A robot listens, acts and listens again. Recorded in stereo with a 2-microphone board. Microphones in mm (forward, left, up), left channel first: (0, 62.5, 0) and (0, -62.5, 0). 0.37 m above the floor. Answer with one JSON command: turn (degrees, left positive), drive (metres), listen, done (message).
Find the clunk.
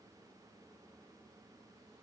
{"listen": true}
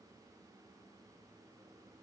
{"listen": true}
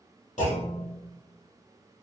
{"turn": 90}
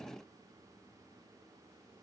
{"done": "I heard a clunk from this way, but can't make it out now."}